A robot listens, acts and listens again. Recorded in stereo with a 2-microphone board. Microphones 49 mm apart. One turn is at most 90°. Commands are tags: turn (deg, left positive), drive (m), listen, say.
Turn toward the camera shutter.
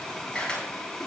<turn deg="15"/>
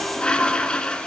<listen/>
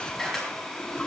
<say>Found it: a camera shutter, straight ahead, over 4 m away.</say>